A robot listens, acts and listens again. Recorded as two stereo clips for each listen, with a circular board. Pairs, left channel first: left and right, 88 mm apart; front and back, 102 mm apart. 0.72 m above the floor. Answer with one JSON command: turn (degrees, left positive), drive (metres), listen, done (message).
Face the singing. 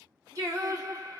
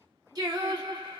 {"turn": -135}
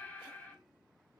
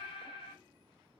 {"turn": 25}
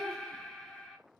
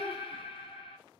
{"done": "Facing the singing, under 1 m away."}